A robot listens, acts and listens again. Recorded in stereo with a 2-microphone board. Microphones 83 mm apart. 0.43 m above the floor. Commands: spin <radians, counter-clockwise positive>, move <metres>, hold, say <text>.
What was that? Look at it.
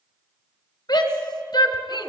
spin 0.96
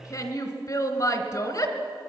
spin 0.96
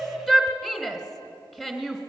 say Facing the shout, 2 to 4 m away.